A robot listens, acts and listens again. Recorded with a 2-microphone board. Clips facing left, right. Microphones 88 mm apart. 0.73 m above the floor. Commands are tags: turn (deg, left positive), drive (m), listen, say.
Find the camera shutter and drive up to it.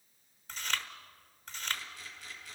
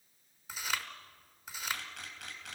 <turn deg="-65"/>
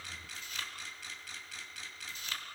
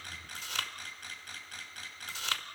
<turn deg="-45"/>
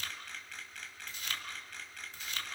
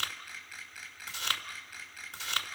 <drive m="1.0"/>
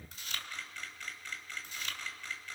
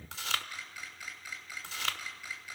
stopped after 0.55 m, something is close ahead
<turn deg="-10"/>
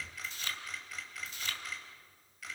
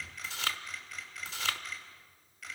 <say>Something is in my way. I am facing the camera shutter but have not reached it.</say>